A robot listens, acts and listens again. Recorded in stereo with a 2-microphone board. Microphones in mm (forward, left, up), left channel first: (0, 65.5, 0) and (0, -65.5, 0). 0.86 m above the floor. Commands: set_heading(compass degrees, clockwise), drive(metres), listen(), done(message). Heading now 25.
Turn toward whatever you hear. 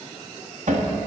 set_heading(95)
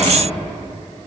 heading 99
listen()
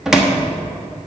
done("Facing the cupboard door, 1 to 2 m away.")